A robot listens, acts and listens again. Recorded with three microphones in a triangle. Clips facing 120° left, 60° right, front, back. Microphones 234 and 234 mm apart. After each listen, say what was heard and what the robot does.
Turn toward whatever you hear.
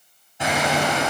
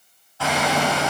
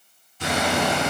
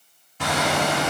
The hammering: 170° right. Turn 170° right.
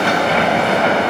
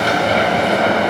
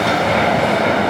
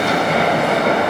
The hammering is now 10° right. Turn 10° right.
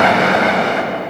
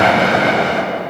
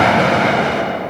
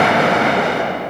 Found it: hammering, straight ahead.